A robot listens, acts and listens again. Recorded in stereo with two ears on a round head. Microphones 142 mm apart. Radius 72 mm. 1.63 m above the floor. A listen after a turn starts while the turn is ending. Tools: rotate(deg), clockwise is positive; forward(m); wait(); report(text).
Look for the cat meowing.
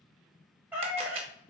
rotate(30)
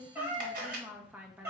rotate(15)
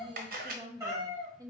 rotate(15)
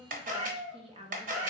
rotate(20)
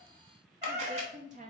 rotate(150)
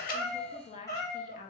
rotate(-20)
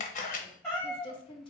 report("Facing the cat meowing.")